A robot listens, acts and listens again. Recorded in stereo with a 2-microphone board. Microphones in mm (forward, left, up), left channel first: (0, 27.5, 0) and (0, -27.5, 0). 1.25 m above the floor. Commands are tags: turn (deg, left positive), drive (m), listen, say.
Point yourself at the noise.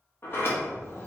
<turn deg="45"/>
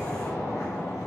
<turn deg="90"/>
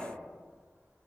<listen/>
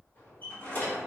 <turn deg="30"/>
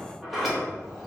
<say>Facing the sliding door, 1 to 2 m away.</say>